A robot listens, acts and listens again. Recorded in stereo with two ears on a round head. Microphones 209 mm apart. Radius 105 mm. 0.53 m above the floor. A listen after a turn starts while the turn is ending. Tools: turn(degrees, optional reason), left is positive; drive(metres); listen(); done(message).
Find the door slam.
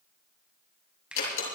turn(degrees=70, reason="The door slam: about 70° left or 110° left.")
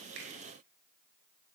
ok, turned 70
listen()
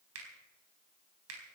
done("I heard a door slam, but can't make it out now. It was about straight ahead or 40° left.")